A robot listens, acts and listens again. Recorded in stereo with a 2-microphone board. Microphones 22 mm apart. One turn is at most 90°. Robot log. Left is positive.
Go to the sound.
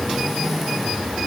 cmd idle
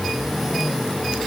cmd idle
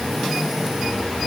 end: I can't make out anything.